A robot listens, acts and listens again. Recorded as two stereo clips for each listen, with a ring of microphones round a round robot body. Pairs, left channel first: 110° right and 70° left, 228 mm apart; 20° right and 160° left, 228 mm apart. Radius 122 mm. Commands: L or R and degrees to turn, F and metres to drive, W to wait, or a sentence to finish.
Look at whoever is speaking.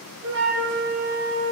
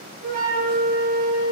W
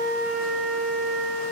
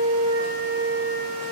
W
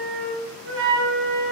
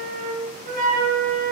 I can't make out anyone speaking, only a flute.